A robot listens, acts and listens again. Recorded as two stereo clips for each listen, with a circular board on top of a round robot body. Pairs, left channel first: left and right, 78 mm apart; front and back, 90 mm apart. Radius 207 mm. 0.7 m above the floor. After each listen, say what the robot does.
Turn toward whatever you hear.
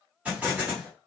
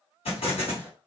Turn 15° right.
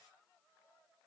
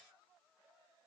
I heard an explosion from this way, but can't make it out now.